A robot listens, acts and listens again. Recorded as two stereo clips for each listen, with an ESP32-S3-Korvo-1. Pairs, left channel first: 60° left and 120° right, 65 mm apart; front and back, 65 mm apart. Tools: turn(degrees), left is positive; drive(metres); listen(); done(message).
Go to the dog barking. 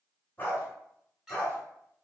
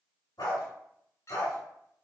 drive(metres=1.0)
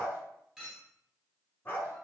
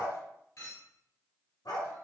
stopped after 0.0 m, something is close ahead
done("Something is in my way. I am facing the dog barking but have not reached it.")